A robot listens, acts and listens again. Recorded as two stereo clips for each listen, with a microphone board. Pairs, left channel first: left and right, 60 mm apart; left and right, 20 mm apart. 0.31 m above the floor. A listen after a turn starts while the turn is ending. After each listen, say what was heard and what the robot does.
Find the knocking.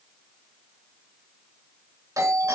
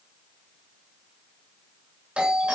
Keep listening.
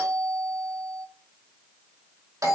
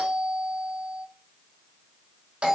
Keep listening.
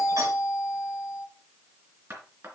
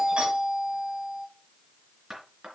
The knocking: about 40° right or 140° right. Turn 40° right.
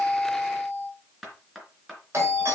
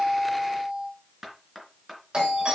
Found it: knocking, straight ahead, 2 to 4 m away.